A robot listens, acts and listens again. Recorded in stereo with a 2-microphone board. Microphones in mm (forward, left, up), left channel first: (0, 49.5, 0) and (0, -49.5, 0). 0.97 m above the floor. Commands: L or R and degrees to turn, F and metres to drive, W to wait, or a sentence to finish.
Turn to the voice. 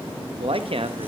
R70
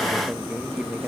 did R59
W
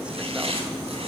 W
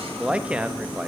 R10
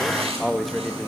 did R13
Facing the man speaking, under 1 m away.